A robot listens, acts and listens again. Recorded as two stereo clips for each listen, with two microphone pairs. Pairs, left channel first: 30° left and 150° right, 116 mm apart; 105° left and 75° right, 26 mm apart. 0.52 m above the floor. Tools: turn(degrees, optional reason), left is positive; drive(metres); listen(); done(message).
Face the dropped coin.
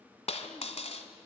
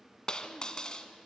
turn(degrees=45, reason="The dropped coin: 45° left.")
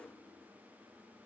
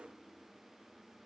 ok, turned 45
done("I heard a dropped coin from this way, but can't make it out now.")